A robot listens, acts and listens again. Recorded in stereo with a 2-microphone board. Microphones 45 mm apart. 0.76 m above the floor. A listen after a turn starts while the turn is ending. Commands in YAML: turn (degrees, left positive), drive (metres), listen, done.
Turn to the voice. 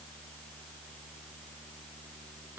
listen: true
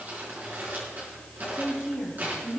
turn: -30
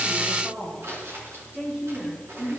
turn: -140
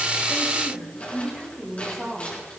done: "Facing the woman speaking."